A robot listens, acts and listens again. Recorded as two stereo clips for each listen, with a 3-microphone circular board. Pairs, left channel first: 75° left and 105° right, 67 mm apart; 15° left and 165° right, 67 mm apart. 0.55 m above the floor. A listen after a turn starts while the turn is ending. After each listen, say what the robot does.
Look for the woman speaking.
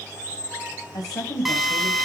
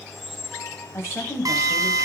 Turn 65° left.
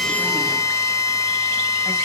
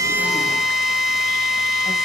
Keep listening.
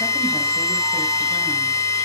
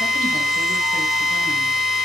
Keep listening.
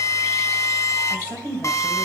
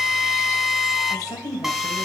Turn 10° left.
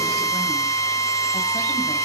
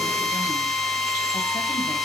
Keep listening.
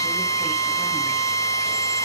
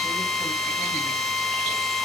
Keep listening.
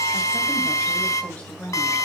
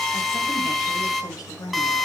Facing the woman speaking, 2 to 4 m away.